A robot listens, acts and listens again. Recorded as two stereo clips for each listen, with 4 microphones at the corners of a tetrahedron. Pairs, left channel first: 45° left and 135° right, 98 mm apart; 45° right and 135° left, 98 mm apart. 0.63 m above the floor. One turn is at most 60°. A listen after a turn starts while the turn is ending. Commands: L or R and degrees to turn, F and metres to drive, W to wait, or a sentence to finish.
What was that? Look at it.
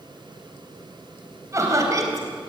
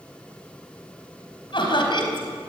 R60
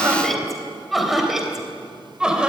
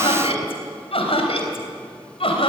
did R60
R55
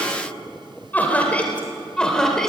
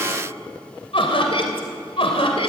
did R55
R40
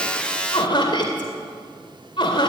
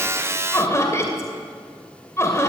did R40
L15
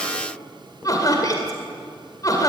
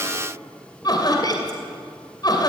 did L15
Found it: laughter, straight ahead, 2 to 4 m away.